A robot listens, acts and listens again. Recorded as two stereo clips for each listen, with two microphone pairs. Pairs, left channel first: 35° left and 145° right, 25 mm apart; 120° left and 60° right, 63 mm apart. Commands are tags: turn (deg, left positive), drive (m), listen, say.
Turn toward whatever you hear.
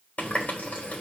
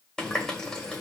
<turn deg="40"/>
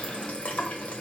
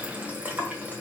<say>Found it: a running tap, straight ahead, 1 to 2 m away.</say>